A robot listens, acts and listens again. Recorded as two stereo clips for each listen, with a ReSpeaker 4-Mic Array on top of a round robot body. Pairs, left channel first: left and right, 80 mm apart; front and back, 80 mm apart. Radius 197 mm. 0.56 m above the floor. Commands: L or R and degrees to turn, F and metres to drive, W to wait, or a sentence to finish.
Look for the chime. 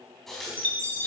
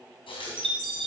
L160
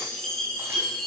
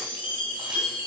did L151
Facing the chime, 2 to 4 m away.